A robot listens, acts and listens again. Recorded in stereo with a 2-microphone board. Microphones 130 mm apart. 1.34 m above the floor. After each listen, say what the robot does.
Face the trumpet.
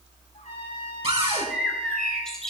Turn 65° left.
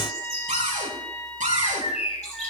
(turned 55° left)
Turn 10° left.
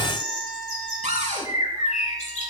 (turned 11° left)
Facing the trumpet, over 4 m away.